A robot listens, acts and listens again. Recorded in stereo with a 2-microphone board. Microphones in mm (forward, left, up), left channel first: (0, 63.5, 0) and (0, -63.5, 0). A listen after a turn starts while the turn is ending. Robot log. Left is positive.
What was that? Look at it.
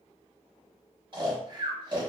note: The snoring: about 40° right or 140° right.
cmd yaw -40
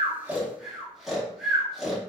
end: Facing the snoring.